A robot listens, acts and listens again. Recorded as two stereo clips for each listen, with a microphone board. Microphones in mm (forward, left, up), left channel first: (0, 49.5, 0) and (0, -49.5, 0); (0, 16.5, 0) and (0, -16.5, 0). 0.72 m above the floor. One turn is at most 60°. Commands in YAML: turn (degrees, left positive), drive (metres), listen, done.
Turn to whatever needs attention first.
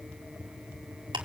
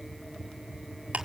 listen: true
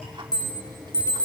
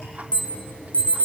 turn: 40
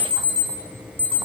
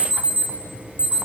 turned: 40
turn: 60
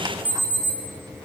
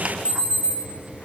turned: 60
turn: 60
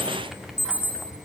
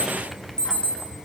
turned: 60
turn: 25
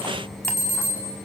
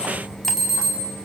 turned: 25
done: "Found it: an alarm, straight ahead, over 4 m away."